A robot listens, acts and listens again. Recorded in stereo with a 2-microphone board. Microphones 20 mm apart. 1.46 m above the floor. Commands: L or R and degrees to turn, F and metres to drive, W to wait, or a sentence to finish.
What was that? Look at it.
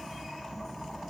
W
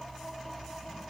W
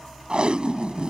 R55
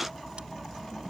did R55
W
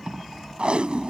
R70
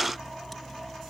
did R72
W
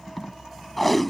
Found it: tape being pulled, straight ahead.